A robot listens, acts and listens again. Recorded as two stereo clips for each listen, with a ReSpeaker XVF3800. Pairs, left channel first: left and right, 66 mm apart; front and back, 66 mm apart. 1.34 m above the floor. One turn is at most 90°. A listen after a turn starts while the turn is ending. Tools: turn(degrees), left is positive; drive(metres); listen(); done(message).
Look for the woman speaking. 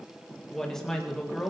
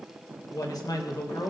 done("Found it: a woman speaking, straight ahead, 2 to 4 m away.")